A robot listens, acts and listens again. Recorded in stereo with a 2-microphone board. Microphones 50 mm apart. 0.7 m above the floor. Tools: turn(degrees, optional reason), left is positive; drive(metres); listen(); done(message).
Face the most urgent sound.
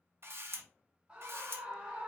turn(degrees=-20, reason="The scream: about 20° right or 160° right.")
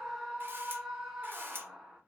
done("Facing the scream, under 1 m away.")